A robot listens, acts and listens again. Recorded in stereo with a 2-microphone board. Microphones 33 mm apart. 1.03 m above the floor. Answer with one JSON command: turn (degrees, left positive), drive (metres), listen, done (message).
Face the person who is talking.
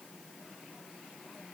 {"listen": true}
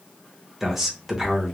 {"turn": -30}
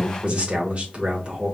{"turn": -135}
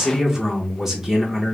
{"turn": -10}
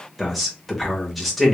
{"done": "Found it: a man speaking, straight ahead."}